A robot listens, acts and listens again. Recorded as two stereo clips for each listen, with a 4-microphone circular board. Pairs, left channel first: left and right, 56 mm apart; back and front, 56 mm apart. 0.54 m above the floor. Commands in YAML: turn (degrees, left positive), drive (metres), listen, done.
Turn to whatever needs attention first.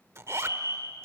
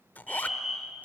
turn: -85
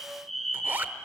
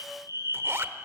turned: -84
done: "Found it: a fire alarm, straight ahead, 2 to 4 m away."